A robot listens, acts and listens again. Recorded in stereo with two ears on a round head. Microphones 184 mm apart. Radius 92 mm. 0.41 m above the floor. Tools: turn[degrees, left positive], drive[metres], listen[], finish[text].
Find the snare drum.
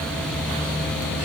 Action: listen[]
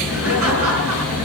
Action: listen[]
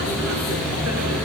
Action: finish[I can't make out a snare drum, only laughter.]